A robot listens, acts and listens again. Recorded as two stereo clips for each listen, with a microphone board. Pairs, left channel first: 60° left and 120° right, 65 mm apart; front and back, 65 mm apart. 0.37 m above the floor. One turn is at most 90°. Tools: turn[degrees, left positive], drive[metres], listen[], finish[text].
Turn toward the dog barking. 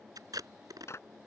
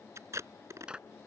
Action: listen[]
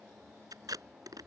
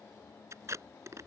Action: listen[]
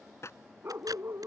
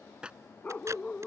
Thought: The dog barking: 70° right.
Action: turn[-70]
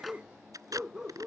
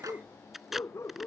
Thought: The dog barking is now 40° right.
Action: turn[-40]
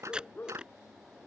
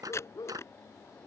Action: finish[Found it: a dog barking, straight ahead.]